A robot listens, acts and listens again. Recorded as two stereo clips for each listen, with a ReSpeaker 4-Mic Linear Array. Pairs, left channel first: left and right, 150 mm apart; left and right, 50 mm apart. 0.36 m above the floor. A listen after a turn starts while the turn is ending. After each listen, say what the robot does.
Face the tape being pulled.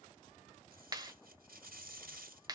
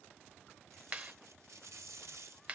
Turn 90° right.
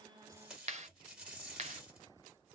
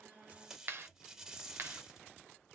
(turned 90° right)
Found it: tape being pulled, straight ahead, 1 to 2 m away.